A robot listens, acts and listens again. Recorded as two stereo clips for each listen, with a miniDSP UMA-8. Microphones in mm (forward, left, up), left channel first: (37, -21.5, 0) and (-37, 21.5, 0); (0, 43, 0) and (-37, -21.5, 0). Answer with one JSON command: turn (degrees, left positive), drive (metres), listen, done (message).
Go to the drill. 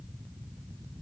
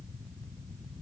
{"listen": true}
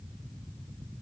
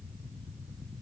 {"listen": true}
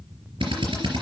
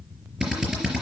{"turn": 160}
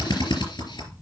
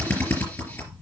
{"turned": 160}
{"drive": 1.0}
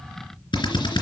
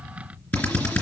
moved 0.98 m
{"drive": 1.0}
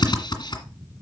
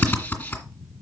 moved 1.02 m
{"drive": 1.0}
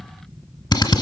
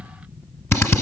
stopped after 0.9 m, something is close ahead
{"turn": 10}
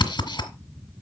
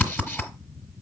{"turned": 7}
{"done": "I am next to the drill."}